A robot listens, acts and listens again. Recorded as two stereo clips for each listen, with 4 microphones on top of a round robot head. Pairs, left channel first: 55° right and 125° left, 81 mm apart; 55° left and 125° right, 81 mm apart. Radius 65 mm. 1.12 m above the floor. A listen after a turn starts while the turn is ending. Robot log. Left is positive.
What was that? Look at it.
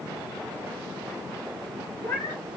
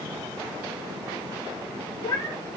end: Facing the cat meowing, 1 to 2 m away.